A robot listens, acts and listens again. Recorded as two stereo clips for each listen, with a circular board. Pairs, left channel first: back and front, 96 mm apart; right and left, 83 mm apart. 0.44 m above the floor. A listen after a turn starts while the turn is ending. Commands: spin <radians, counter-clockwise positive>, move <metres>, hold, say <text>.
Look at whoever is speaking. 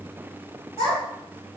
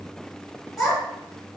spin 3.14
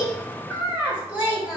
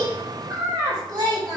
spin 1.31
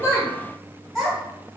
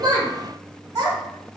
spin 0.96
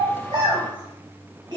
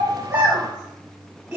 spin 0.26
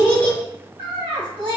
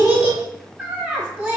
say Facing the child speaking, 1 to 2 m away.